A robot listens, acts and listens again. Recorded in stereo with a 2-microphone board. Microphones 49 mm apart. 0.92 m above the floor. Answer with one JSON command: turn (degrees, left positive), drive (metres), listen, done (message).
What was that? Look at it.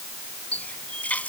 {"turn": 30}
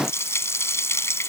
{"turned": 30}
{"turn": 120}
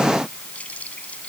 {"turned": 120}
{"listen": true}
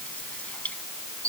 {"turn": 30}
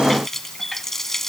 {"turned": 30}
{"turn": 10}
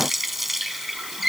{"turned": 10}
{"done": "Facing the running tap."}